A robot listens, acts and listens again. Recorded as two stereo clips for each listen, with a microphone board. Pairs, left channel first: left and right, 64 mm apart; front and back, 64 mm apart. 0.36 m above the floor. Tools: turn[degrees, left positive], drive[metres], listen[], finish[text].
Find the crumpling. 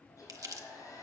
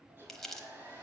Thought: The crumpling: 85° right.
Action: turn[-85]
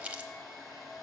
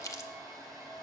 Thought: The crumpling is now 20° right.
Action: turn[-20]
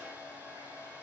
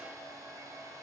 Action: listen[]
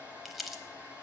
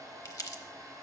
Action: finish[Facing the crumpling, under 1 m away.]